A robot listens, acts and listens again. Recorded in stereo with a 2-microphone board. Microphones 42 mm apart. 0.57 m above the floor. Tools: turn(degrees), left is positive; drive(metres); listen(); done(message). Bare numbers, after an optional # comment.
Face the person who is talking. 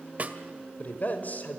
# The man speaking: about 45° left or 135° left.
turn(45)
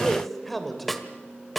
done("Found it: a man speaking, straight ahead.")